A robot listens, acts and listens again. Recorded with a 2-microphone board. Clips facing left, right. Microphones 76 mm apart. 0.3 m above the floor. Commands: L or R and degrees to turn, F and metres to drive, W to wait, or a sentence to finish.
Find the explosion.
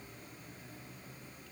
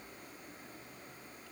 W
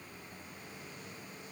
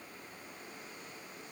W
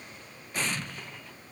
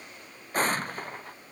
R45
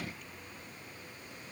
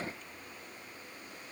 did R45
W
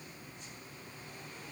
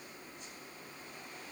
I heard an explosion, but can't make it out now. It was about straight ahead or 90° right.